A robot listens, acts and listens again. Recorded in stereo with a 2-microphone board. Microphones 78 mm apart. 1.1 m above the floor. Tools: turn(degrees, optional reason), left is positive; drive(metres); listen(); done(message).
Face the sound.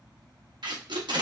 turn(degrees=-70, reason="The tape being pulled: about 70° right or 110° right.")
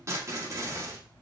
turn(degrees=-40, reason="So it is at 40° right.")
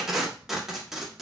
done("Facing the tape being pulled, 1 to 2 m away.")